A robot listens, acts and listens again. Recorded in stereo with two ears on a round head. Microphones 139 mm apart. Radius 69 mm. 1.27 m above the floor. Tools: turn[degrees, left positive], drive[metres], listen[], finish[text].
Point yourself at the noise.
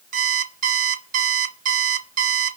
Thought: The alarm clock: about 55° right or 125° right.
Action: turn[-55]
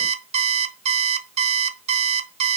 Thought: So it is at 55° right.
Action: turn[-55]
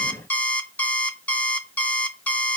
Thought: The alarm clock is now 10° left.
Action: turn[10]
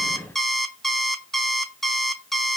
Action: finish[Facing the alarm clock, under 1 m away.]